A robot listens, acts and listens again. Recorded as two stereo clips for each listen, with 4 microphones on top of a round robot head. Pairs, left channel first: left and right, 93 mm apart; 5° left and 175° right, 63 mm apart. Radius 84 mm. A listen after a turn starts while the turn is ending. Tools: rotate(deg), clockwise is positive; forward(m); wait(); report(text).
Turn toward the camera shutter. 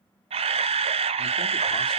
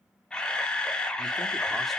rotate(75)
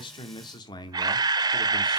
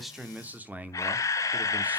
rotate(40)
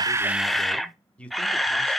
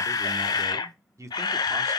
report("Found it: a camera shutter, straight ahead.")